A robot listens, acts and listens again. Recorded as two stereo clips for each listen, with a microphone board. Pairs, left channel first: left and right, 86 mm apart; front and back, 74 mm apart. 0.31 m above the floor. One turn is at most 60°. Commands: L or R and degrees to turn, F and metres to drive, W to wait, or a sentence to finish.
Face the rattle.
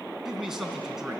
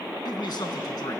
W
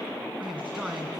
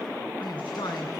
W
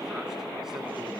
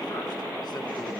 I can't make out a rattle, only a man speaking.